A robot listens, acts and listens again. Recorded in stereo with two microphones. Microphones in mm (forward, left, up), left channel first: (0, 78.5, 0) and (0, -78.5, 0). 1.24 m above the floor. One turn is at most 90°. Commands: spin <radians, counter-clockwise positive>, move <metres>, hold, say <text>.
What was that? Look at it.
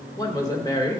spin 0.35
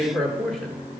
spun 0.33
say Found it: a woman speaking, straight ahead, 1 to 2 m away.